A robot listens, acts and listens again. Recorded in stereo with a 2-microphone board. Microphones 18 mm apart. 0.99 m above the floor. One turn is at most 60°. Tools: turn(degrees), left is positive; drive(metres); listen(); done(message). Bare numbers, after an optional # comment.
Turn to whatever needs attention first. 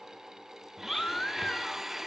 # The baby crying: about 70° left or 110° left.
turn(60)
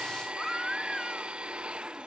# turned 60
# So it is at 15° left.
turn(15)
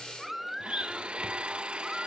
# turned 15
done("Found it: a baby crying, straight ahead, 1 to 2 m away.")